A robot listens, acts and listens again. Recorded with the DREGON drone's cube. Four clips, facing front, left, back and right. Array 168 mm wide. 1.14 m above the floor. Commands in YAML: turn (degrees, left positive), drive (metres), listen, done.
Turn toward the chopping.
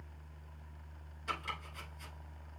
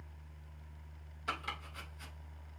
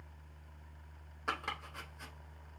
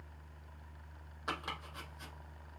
turn: -145
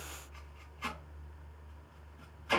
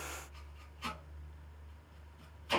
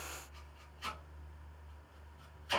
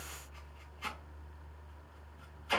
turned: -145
done: "Facing the chopping."